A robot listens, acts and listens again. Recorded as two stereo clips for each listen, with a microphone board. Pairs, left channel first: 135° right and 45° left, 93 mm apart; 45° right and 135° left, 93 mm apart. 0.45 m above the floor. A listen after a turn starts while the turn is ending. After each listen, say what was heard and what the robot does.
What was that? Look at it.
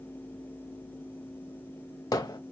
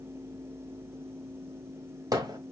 The hammering: straight behind. Turn 180° left.
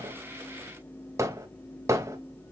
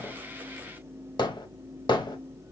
The hammering is now 10° right. Turn 10° right.
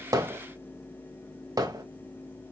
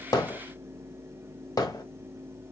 Found it: hammering, straight ahead.